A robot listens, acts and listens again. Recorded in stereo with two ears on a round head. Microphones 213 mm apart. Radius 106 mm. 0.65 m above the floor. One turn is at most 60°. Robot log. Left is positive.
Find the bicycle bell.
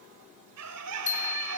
note: The bicycle bell: about 30° left or 150° left.
cmd yaw +30
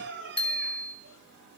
end: Found it: a bicycle bell, straight ahead.